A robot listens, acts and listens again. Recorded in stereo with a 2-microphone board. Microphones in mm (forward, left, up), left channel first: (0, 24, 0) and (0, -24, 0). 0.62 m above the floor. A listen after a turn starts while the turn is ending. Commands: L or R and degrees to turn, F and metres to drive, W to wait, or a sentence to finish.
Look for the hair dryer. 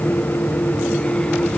W
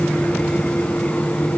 W
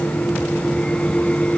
I can't make out a hair dryer.